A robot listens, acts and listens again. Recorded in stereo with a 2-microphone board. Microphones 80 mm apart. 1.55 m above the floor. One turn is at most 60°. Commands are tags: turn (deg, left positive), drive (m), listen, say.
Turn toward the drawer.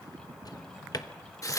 <turn deg="55"/>
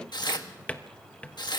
<turn deg="20"/>
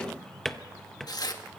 <say>Found it: a drawer, straight ahead, 1 to 2 m away.</say>